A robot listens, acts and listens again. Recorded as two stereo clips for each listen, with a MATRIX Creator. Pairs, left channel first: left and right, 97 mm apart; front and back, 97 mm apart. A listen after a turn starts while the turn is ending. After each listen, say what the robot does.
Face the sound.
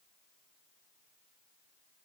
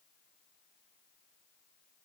Keep listening.
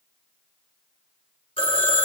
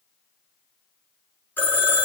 Turn 70° left.
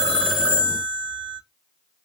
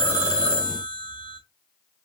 Turn 15° right.
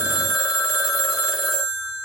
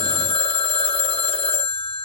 Facing the phone ringing, under 1 m away.